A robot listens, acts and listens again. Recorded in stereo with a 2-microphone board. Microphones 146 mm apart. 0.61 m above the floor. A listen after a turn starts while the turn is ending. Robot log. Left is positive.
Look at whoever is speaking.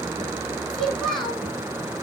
cmd yaw +30
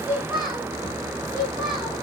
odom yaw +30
note: So it is at 35° right.
cmd yaw -35
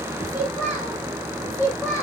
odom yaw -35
note: The child speaking is now 15° right.
cmd yaw -15
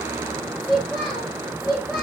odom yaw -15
end: Facing the child speaking.